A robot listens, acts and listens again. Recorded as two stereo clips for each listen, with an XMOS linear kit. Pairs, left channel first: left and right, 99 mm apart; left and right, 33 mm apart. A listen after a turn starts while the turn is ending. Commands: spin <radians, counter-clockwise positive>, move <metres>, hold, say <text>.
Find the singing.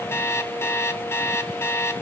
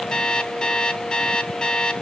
hold
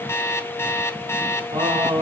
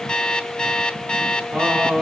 spin -1.05
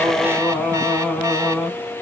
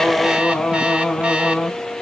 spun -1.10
say Facing the singing.